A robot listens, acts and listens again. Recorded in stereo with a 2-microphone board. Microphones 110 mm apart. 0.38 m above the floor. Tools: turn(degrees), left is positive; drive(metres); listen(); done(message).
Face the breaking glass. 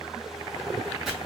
listen()
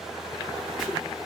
listen()
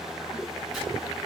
done("I can't make out breaking glass, only chopping.")